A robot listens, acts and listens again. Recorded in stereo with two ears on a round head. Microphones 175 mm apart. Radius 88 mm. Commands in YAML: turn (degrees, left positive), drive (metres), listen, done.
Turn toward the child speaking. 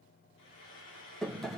listen: true
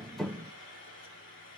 listen: true
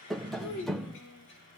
turn: 90
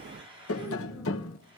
listen: true
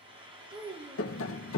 turn: -20
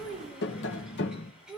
done: "Facing the child speaking."